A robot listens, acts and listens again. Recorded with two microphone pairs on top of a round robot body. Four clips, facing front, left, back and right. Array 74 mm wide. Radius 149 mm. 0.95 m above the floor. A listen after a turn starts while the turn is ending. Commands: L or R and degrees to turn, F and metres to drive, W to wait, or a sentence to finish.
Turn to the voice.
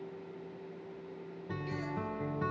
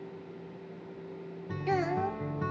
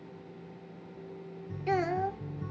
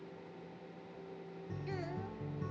L145
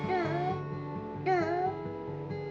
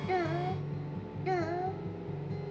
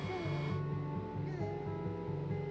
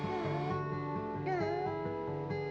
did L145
L15
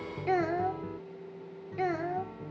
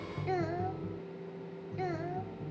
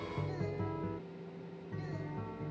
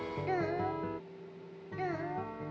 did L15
Found it: a child speaking, straight ahead.